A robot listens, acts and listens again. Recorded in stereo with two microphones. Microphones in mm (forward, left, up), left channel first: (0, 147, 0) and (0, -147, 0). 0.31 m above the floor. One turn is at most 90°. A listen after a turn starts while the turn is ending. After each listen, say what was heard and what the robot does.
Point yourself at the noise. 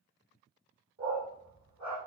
The dog barking: about 70° right or 110° right. Turn 70° right.
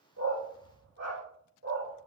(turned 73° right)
So it is at 40° right. Turn 40° right.
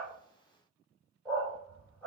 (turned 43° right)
Facing the dog barking, over 4 m away.